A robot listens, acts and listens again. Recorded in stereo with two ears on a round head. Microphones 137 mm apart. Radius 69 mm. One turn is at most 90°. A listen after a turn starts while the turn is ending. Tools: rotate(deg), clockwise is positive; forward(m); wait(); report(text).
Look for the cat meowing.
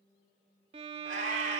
rotate(50)
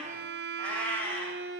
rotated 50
rotate(-15)
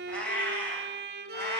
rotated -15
rotate(-20)
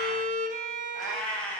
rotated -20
rotate(-10)
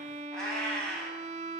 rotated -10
report("Facing the cat meowing.")